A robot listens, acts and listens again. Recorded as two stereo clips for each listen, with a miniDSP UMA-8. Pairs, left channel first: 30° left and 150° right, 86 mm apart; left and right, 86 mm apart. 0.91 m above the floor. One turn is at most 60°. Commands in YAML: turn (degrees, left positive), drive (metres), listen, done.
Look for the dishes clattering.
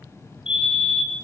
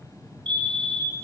listen: true
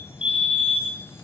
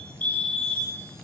listen: true
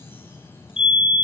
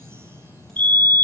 done: "I can't make out dishes clattering to turn to."